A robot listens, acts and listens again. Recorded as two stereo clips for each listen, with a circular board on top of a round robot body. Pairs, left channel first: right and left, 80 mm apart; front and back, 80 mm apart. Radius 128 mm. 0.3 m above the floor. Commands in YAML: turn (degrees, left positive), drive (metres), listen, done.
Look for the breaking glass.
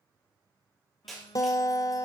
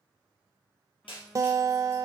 done: "Found it: breaking glass, straight ahead."